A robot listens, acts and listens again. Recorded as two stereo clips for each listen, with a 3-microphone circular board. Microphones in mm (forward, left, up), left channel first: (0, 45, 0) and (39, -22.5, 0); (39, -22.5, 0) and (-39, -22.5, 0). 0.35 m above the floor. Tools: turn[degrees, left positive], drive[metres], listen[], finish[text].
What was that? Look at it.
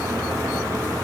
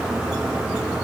Action: listen[]
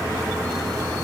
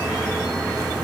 Action: listen[]
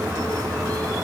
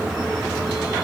Action: finish[I can't make out anything.]